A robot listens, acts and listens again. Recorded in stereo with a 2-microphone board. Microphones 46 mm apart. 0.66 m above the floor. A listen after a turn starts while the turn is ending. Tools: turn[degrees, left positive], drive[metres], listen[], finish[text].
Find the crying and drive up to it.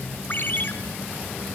Action: listen[]
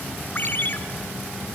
Action: listen[]
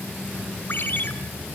Action: finish[I can't make out crying to turn to.]